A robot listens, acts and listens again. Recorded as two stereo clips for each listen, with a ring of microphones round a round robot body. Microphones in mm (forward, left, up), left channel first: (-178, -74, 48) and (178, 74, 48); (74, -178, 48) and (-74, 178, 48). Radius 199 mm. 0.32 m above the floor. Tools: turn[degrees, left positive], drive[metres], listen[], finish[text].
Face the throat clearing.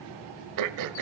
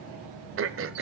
Thought: The throat clearing: 60° left.
Action: turn[60]
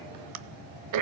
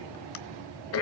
Thought: The throat clearing is now 15° right.
Action: turn[-15]
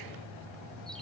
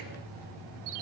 Action: listen[]
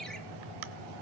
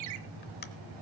Action: finish[Facing the throat clearing.]